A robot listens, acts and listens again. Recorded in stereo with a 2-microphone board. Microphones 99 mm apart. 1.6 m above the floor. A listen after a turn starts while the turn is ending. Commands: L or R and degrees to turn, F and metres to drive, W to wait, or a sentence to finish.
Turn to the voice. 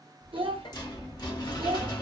R65
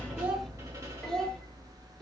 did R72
W
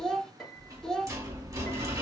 Found it: a child speaking, straight ahead.